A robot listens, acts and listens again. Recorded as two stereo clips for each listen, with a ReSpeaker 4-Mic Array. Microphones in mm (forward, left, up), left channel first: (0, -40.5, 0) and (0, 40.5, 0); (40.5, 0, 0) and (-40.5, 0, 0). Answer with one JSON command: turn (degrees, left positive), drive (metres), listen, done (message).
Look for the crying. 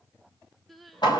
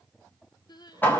{"done": "Facing the crying, 1 to 2 m away."}